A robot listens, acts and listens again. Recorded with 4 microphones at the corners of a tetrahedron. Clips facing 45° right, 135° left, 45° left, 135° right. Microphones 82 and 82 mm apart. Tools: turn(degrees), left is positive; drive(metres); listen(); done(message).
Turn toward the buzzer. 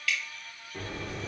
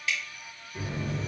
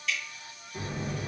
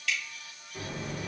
turn(degrees=-30)
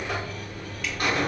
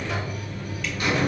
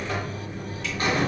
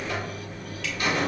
done("Facing the buzzer.")